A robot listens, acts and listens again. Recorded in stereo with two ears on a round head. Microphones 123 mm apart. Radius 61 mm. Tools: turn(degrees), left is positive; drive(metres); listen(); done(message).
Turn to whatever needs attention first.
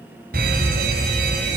turn(degrees=-75)
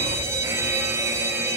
turn(degrees=-20)
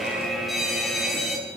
done("Facing the fire alarm, over 4 m away.")